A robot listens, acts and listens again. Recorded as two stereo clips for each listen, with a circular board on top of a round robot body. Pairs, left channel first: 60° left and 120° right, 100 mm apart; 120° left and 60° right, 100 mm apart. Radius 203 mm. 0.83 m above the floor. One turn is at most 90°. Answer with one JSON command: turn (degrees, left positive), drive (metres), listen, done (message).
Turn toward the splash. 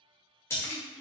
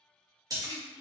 {"done": "Found it: a splash, straight ahead."}